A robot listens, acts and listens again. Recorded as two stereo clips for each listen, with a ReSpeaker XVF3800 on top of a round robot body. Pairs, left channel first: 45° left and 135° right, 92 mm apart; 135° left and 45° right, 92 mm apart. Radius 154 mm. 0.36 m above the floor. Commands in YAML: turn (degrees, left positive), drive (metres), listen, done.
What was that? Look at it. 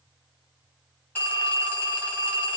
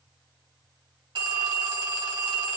turn: -20
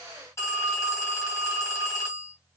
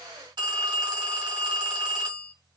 done: "Found it: a phone ringing, straight ahead."